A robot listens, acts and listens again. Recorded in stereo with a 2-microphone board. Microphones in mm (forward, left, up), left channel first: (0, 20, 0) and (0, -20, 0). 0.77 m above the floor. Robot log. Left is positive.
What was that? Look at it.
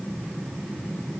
cmd idle
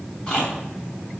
note: The chewing: about 20° left or 160° left.
cmd yaw +20
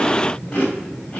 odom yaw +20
note: So it is at 140° left.
cmd yaw +140
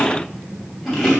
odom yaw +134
end: Facing the chewing.